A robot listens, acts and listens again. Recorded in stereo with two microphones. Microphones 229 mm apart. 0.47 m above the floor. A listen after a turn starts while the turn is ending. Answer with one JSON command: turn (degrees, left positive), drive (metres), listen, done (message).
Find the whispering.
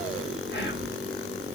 {"turn": 50}
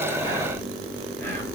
{"turn": 10}
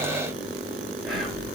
{"done": "Facing the whispering."}